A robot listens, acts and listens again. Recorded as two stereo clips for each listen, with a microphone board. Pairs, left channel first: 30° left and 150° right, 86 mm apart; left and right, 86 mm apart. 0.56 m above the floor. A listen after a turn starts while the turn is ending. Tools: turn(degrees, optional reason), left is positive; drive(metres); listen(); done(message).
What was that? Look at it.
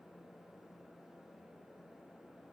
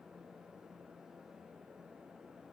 listen()
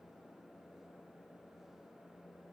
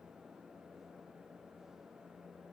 listen()
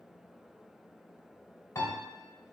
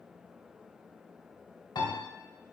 turn(degrees=80, reason="The piano: 80° left.")
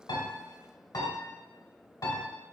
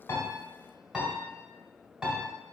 turn(degrees=-10, reason="The piano is now 10° right.")
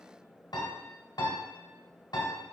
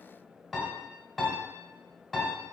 done("Found it: a piano, straight ahead.")